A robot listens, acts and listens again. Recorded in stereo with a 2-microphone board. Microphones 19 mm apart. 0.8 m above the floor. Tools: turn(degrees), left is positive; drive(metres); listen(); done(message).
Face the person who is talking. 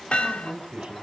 turn(degrees=-90)
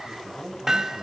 turn(degrees=-10)
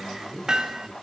done("Facing the man speaking.")